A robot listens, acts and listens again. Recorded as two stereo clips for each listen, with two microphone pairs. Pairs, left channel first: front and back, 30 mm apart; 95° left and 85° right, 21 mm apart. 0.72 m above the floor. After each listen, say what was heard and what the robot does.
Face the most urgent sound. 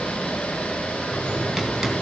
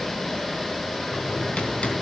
Keep listening.
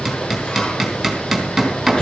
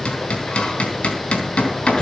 Keep listening.
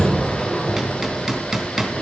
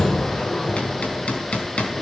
I can't make out anything urgent to turn to.